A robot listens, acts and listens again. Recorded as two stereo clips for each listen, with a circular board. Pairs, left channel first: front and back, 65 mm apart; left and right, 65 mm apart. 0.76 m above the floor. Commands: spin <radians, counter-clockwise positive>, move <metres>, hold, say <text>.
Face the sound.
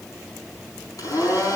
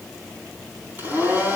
spin -0.52
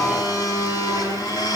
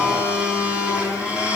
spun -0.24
spin -0.35
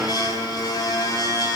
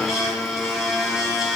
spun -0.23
say Found it: a blender, straight ahead.